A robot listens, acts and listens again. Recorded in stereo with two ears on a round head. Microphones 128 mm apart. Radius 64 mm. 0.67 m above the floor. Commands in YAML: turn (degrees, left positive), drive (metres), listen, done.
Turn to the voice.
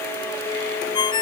listen: true
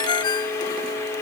listen: true
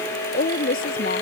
turn: 65
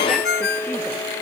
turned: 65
listen: true
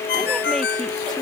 listen: true
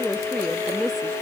done: "Facing the woman speaking."